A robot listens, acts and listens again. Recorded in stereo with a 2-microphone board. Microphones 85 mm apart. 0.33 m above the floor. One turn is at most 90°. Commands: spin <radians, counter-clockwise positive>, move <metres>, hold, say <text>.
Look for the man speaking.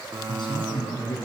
spin 1.22
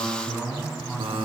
say Facing the man speaking.